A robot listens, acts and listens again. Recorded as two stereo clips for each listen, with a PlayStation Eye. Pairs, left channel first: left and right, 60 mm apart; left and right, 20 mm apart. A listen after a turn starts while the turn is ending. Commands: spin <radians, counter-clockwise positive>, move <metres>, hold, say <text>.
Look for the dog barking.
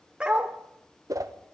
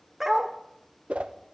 spin -0.26
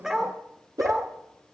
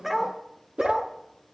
say Facing the dog barking.